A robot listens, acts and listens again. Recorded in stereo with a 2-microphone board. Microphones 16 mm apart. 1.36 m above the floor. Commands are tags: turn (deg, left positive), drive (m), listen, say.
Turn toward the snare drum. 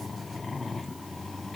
<listen/>
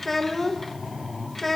<listen/>
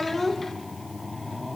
<say>I can't make out a snare drum, only a child speaking.</say>